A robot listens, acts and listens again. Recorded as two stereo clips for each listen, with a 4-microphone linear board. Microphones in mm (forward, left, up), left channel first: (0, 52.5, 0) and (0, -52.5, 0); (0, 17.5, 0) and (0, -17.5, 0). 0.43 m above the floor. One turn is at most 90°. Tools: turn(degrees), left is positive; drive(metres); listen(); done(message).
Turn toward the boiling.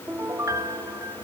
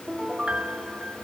listen()
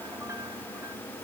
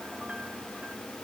listen()
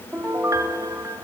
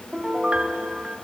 done("I can't make out boiling to turn to.")